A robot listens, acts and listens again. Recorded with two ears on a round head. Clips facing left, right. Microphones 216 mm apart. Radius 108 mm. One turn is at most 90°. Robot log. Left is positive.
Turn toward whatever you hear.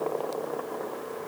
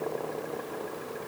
cmd idle
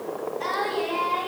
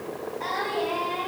cmd yaw +30
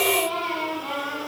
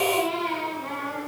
note: So it is at 25° right.
cmd yaw -25
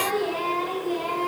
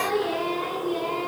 note: The singing is now 15° right.
cmd yaw -15
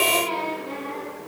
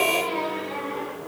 end: Found it: singing, straight ahead.